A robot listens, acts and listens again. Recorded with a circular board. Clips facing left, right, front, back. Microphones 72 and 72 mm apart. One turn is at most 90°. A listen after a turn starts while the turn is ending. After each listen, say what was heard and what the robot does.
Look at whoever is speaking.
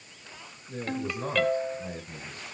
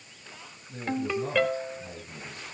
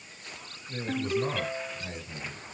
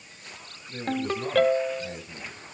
The man speaking: 70° left. Turn 70° left.
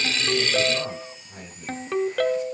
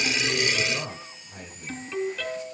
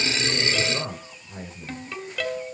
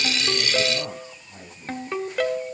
Found it: a man speaking, straight ahead, over 4 m away.